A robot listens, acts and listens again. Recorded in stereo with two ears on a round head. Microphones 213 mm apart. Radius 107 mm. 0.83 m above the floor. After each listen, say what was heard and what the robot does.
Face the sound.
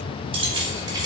The keys jangling: about 20° right or 160° right. Turn 20° right.
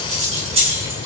The keys jangling: about 25° right or 155° right. Turn 25° right.
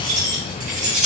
The keys jangling: about 35° right or 145° right. Turn 35° right.
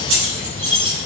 So it is at 125° right. Turn 125° right.
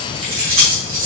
The keys jangling is now 60° right. Turn 60° right.
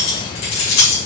The keys jangling is now 30° left. Turn 30° left.
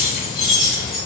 Facing the keys jangling.